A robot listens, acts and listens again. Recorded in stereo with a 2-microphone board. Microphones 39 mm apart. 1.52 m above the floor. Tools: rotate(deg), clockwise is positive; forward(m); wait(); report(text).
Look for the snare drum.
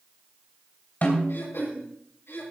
rotate(-45)
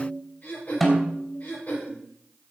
report("Found it: a snare drum, straight ahead.")